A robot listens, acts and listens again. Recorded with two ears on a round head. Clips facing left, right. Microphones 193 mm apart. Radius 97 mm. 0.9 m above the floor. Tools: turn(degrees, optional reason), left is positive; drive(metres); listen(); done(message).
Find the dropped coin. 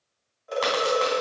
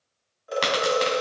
turn(degrees=-40, reason="The dropped coin: about 40° right or 140° right.")
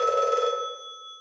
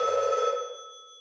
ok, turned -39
listen()
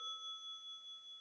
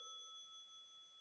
done("I heard a dropped coin, but can't make it out now. It was about straight ahead or 100° right.")